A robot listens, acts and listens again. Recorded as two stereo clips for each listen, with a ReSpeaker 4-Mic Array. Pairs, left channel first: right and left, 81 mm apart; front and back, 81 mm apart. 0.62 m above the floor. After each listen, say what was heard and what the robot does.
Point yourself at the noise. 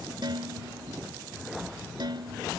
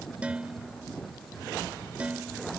The dishes clattering: 105° left. Turn 105° left.
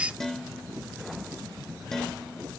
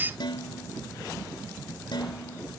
Found it: dishes clattering, straight ahead.